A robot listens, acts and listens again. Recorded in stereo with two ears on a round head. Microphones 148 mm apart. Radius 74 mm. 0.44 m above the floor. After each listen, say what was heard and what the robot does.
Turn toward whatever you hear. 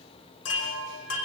Turn 90° left.
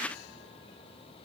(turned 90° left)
Keep listening.
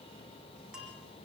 Facing the chime.